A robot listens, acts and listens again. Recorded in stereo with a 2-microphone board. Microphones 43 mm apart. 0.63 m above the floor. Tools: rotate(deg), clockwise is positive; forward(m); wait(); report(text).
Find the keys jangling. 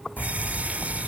rotate(-65)
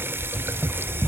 rotate(-35)
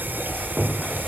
rotate(-10)
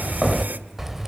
report("Found it: keys jangling, straight ahead, 1 to 2 m away.")